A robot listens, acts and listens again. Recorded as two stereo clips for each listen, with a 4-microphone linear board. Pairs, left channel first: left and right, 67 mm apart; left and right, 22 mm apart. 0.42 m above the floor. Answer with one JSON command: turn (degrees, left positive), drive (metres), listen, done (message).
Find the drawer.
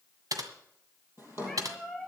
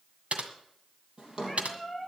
{"turn": -35}
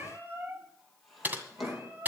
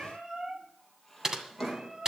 {"done": "Facing the drawer."}